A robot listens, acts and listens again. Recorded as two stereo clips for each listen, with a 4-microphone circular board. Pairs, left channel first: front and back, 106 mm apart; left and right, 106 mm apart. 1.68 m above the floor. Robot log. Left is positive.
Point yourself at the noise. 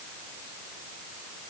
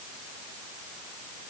cmd idle
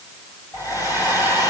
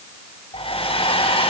note: The hair dryer: 55° left.
cmd yaw +55
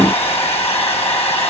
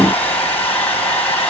note: The hair dryer is now 15° left.
cmd yaw +15
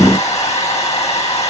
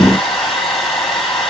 end: Facing the hair dryer.